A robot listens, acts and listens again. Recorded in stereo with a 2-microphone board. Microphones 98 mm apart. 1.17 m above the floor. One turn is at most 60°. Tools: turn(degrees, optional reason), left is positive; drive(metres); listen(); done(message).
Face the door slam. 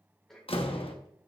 turn(degrees=60, reason="The door slam: about 70° left or 110° left.")
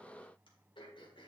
listen()
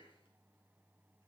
done("I heard a door slam, but can't make it out now. It was about 10° left or 50° left.")